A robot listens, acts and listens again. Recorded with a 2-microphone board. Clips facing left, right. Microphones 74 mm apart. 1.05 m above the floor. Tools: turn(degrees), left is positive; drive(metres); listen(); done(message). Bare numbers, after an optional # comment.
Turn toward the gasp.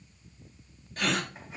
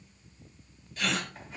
# The gasp: about 50° left or 130° left.
turn(50)
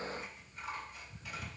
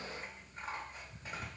listen()
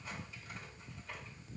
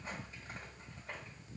done("I heard a gasp, but can't make it out now. It was about straight ahead or 80° left.")